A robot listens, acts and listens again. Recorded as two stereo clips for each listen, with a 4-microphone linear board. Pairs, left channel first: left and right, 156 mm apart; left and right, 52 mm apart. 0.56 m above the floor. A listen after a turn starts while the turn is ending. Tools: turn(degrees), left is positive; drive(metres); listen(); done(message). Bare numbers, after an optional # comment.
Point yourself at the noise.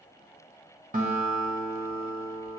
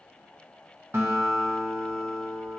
# The guitar: about 60° right or 120° right.
turn(-60)
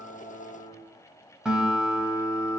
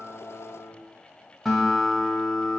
done("Found it: a guitar, straight ahead, 1 to 2 m away.")